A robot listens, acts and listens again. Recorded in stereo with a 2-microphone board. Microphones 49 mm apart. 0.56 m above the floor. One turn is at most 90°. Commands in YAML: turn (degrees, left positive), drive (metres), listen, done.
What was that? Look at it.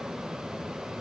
listen: true
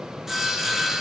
turn: -30
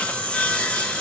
turn: 25
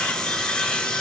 turn: 15
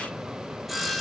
done: "Found it: sawing, straight ahead, under 1 m away."